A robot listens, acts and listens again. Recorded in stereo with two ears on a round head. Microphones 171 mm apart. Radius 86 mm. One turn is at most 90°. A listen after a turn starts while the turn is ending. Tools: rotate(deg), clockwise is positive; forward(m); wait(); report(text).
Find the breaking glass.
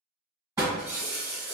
rotate(30)
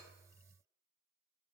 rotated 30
wait()
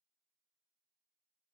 report("I heard breaking glass, but can't make it out now. It was about 15° left or 135° right.")